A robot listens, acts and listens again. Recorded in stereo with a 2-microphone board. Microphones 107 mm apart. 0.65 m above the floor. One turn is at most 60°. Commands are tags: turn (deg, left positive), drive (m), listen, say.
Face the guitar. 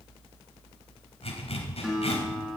<turn deg="-30"/>
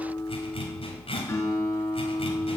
<turn deg="25"/>
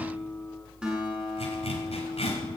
<turn deg="-10"/>
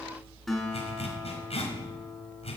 <say>Facing the guitar.</say>